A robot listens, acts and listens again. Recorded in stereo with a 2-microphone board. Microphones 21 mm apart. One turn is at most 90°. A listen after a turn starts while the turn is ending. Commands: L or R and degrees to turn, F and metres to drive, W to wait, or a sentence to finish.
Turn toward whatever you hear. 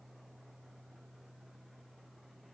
W
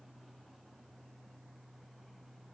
W
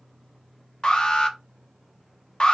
L45
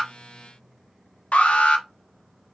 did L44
L90
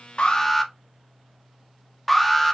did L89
Facing the alarm, under 1 m away.